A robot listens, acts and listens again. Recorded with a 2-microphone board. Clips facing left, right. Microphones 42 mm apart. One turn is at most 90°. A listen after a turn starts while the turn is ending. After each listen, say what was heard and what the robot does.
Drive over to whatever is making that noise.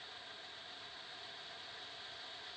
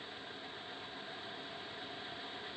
Keep listening.
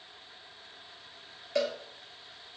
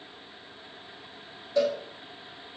Turn 90° left.
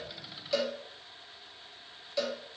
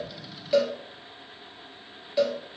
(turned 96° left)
So it is at 15° right. Turn 15° right.
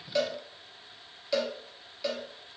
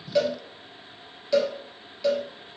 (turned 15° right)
Drive 1.0 m forward.
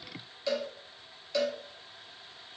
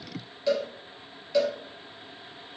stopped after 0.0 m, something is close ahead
Blocked. The cowbell is further on, straight ahead.